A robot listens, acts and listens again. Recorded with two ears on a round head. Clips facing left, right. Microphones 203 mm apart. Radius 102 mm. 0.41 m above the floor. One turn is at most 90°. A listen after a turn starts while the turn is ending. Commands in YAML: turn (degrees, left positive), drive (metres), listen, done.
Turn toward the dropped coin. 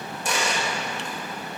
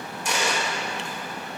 turn: 30
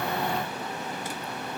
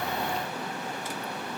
listen: true
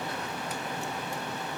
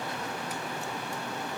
done: "I heard a dropped coin, but can't make it out now. It was about straight ahead or 120° left."